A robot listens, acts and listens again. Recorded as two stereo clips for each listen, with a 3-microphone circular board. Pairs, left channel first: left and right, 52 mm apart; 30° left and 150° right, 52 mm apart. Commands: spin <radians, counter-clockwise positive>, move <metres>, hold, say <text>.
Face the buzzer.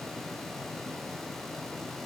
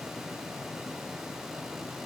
hold
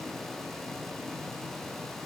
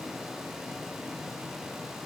hold
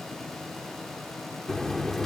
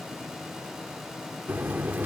spin 2.97
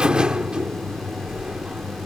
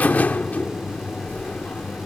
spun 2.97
spin -0.35
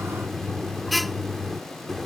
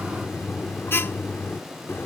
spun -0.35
say Found it: a buzzer, straight ahead.